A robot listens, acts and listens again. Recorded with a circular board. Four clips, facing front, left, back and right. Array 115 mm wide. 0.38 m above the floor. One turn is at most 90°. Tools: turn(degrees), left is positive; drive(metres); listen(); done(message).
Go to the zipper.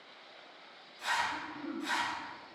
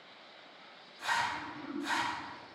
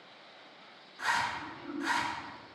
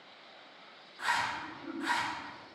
turn(degrees=-90)
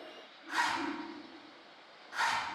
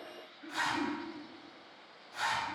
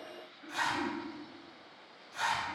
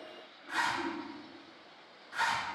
turn(degrees=-45)
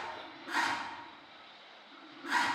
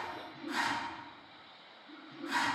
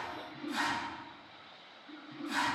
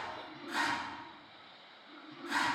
drive(metres=1.0)
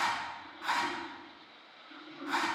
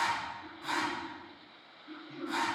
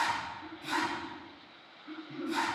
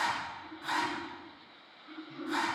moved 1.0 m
drive(metres=1.0)
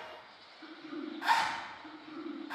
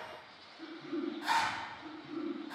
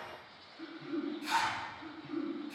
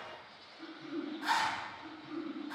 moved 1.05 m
drive(metres=1.0)
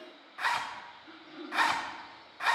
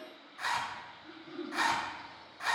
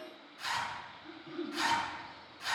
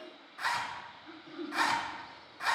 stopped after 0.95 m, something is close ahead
done("Arrived at the zipper, straight ahead.")